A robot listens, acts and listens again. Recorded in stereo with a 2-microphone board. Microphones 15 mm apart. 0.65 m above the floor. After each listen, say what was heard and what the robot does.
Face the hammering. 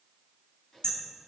Turn 90° left.
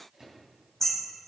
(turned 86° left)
So it is at 15° left. Turn 15° left.
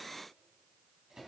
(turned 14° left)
Keep listening.
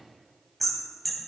Found it: hammering, straight ahead, 2 to 4 m away.